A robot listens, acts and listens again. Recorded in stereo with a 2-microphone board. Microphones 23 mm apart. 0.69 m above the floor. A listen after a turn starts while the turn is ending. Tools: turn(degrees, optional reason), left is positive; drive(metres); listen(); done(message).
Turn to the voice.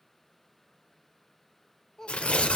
turn(degrees=25, reason="The child speaking: about 25° left or 155° left.")
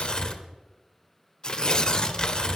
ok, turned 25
listen()
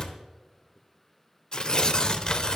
done("Found it: a child speaking, straight ahead, 1 to 2 m away.")